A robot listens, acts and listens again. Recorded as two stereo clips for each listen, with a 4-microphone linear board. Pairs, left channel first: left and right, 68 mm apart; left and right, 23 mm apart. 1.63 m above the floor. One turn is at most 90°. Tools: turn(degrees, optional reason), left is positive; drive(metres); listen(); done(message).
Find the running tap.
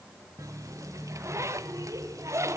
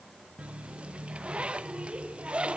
turn(degrees=-50, reason="The running tap: about 50° right or 130° right.")
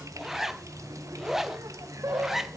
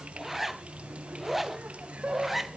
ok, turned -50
turn(degrees=-65, reason="So it is at 65° right.")
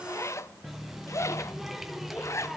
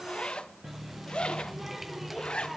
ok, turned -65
done("Found it: a running tap, straight ahead, 1 to 2 m away.")